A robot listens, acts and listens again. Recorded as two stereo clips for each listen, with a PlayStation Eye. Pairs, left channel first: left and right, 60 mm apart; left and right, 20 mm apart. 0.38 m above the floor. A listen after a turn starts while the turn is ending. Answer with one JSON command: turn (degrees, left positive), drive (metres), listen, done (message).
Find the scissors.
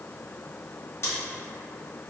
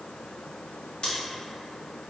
{"turn": 50}
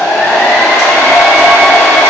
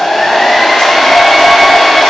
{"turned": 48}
{"listen": true}
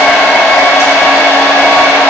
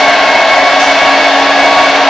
{"listen": true}
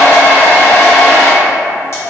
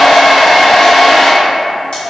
{"done": "I heard scissors, but can't make it out now. It was about 5° left or 80° left."}